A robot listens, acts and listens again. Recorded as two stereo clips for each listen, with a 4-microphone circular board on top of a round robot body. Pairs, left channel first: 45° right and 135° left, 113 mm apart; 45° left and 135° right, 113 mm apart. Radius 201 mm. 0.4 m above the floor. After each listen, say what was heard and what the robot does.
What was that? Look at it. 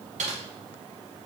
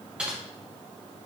The typing on a keyboard: 145° left. Turn 145° left.
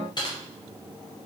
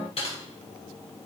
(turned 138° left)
Found it: typing on a keyboard, straight ahead.